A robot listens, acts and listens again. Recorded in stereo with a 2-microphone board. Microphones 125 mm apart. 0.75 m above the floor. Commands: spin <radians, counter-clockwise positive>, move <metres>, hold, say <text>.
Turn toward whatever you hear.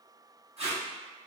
spin -0.96
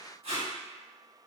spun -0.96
spin -1.13
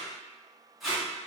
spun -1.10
say Facing the tape being pulled, 1 to 2 m away.